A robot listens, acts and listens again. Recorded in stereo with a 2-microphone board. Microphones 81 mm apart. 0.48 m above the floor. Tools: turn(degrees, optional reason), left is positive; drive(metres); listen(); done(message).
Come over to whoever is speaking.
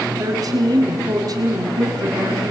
turn(degrees=-50, reason="The woman speaking: about 50° right or 130° right.")
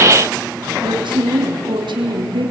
turn(degrees=-80, reason="So it is at 80° right.")
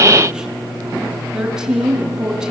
turn(degrees=-10, reason="The woman speaking is now 10° right.")
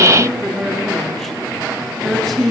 drive(metres=1.0)
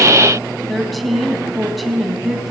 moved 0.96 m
drive(metres=1.0)
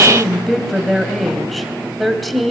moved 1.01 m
drive(metres=1.0)
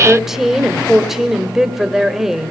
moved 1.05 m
drive(metres=1.0)
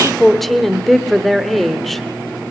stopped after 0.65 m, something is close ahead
done("I am next to the woman speaking.")